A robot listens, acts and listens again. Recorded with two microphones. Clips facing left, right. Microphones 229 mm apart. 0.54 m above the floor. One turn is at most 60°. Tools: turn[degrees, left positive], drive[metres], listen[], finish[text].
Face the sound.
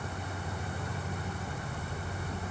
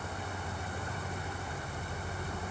Action: listen[]
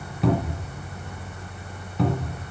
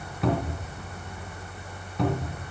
Action: turn[30]
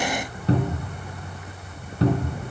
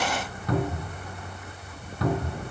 Thought: So it is at 150° left.
Action: turn[60]
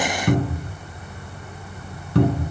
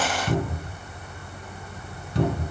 Thought: The cupboard door is now 115° left.
Action: turn[60]
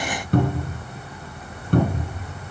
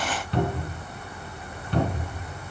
Thought: The cupboard door is now 50° left.
Action: turn[50]
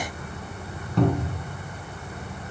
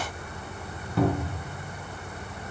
Action: finish[Facing the cupboard door, 2 to 4 m away.]